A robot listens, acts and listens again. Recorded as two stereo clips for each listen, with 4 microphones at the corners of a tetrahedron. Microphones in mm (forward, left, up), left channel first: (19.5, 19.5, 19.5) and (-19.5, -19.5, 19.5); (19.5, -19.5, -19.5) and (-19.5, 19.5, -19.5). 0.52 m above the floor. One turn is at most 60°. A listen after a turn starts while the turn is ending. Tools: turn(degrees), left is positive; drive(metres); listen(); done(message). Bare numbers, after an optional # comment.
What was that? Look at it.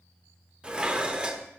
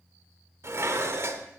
# The dishes clattering: 155° left.
turn(60)
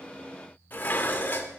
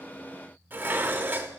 # The dishes clattering is now 95° left.
turn(60)
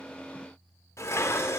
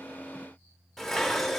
# The dishes clattering is now 40° left.
turn(40)
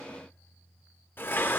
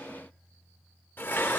done("Found it: dishes clattering, straight ahead, under 1 m away.")